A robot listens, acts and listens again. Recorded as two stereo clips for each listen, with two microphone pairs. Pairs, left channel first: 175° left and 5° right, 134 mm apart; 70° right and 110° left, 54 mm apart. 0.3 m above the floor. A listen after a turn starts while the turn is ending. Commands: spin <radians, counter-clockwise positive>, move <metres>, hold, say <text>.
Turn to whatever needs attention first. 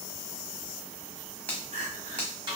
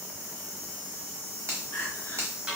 spin -0.61
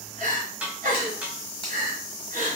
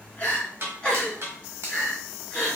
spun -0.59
say Found it: crying, straight ahead, 1 to 2 m away.